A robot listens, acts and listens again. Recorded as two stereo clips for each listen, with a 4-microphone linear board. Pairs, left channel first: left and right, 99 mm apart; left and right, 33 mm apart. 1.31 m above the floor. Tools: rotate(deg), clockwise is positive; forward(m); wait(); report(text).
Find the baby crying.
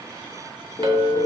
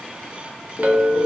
wait()
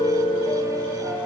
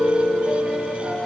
wait()
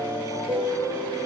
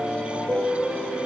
report("I can't make out a baby crying to turn to.")